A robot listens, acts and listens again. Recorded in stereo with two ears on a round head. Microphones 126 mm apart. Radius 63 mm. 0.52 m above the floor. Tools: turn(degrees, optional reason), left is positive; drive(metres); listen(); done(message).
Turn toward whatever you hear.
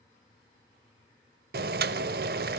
turn(degrees=-75, reason="The boiling: about 75° right or 105° right.")
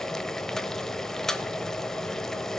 done("Found it: boiling, straight ahead, under 1 m away.")